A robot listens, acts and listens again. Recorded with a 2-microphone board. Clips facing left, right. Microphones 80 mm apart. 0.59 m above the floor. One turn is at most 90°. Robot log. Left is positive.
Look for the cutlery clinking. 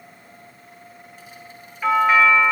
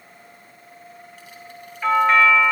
cmd idle
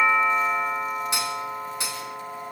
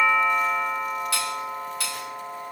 note: The cutlery clinking: about 20° left or 160° left.
cmd yaw +20
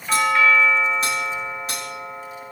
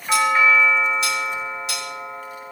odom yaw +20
note: So it is at 140° left.
cmd yaw +90
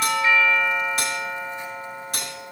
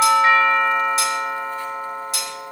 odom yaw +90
note: The cutlery clinking is now 50° left.
cmd yaw +50
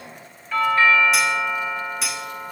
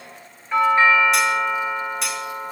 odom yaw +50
end: Found it: cutlery clinking, straight ahead.